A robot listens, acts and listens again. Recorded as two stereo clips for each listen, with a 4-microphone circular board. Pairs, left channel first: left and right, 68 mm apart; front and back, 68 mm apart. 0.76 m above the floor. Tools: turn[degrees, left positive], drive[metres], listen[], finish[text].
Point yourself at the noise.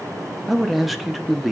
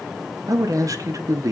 Thought: The man speaking: straight behind.
Action: turn[180]
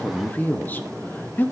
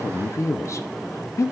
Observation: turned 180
Thought: The man speaking is now 30° left.
Action: turn[30]
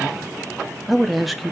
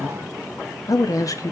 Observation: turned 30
Action: finish[Found it: a man speaking, straight ahead.]